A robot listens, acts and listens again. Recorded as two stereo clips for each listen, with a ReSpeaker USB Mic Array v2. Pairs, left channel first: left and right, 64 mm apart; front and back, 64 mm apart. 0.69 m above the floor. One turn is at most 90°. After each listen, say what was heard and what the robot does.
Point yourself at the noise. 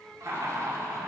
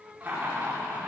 The laughter: 115° right. Turn 90° right.
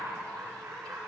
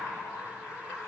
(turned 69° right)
The laughter is now 45° right. Turn 45° right.
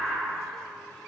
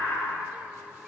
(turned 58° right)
The laughter is now 15° left. Turn 15° left.
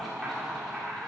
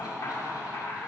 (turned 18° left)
Found it: laughter, straight ahead.